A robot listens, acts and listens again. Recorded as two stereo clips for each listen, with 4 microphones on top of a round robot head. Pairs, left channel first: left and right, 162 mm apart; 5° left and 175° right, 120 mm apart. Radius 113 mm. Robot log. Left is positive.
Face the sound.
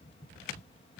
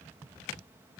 cmd idle
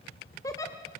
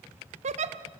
note: The giggle: 165° left.
cmd yaw +165
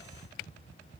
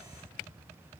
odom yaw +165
cmd idle
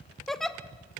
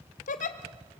end: Found it: a giggle, straight ahead, 1 to 2 m away.